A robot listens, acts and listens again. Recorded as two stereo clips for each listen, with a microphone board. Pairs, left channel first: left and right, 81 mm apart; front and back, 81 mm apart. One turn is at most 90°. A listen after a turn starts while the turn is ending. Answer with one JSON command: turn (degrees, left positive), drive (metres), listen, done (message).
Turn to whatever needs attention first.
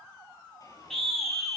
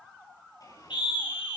{"done": "Facing the scream."}